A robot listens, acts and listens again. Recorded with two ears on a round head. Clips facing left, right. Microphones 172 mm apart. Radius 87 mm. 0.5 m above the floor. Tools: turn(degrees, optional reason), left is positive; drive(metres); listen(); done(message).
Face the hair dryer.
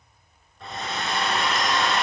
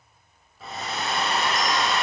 turn(degrees=-30)
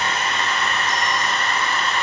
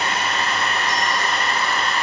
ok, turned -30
turn(degrees=-145, reason="So it is at 145° right.")
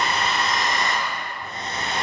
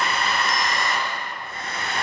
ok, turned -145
turn(degrees=20, reason="The hair dryer is now 20° left.")
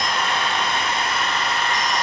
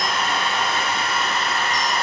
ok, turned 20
done("Facing the hair dryer, over 4 m away.")